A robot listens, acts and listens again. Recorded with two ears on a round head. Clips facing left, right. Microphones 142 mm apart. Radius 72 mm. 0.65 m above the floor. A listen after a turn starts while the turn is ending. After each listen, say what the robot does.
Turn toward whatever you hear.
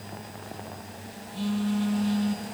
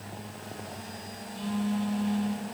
Turn 55° left.
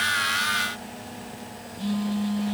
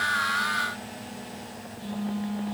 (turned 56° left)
Turn 70° left.
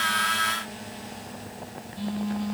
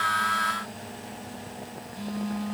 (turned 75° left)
Found it: a phone buzzing, straight ahead, over 4 m away.